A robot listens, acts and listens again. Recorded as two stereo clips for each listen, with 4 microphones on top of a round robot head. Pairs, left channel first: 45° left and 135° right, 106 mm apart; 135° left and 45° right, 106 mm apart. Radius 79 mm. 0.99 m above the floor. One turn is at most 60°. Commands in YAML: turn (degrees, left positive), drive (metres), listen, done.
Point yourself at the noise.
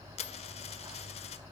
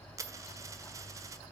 turn: 15
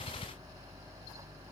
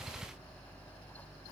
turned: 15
done: "Facing where the dropped coin came from. I can't hear it now."